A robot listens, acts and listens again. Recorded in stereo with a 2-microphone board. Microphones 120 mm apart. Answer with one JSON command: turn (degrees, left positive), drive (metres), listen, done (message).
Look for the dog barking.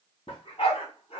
{"turn": 65}
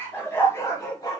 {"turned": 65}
{"turn": 35}
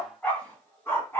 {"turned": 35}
{"turn": 25}
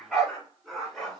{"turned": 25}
{"done": "Facing the dog barking."}